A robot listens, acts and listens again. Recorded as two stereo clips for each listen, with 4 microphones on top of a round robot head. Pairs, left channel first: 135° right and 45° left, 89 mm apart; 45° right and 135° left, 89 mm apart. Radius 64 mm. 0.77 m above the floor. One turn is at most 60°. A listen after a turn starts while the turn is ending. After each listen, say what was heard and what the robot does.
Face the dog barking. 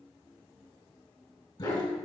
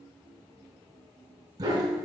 The dog barking: 175° right. Turn 60° right.
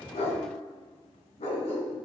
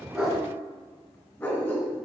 The dog barking is now 110° right. Turn 60° right.
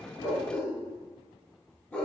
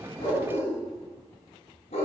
The dog barking is now 55° right. Turn 55° right.
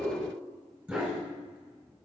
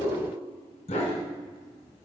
The dog barking is now 30° right. Turn 30° right.
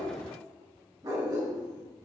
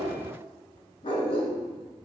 Found it: a dog barking, straight ahead.